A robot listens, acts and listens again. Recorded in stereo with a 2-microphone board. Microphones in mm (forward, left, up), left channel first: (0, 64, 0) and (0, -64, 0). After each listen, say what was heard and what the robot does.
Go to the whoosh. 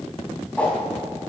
Turn 30° left.
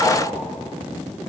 Keep listening.
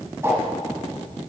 So it is at 20° right. Turn 20° right.
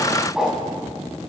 Drive 1.0 m forward.
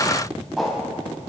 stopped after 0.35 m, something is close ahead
Blocked. The whoosh is further on, straight ahead.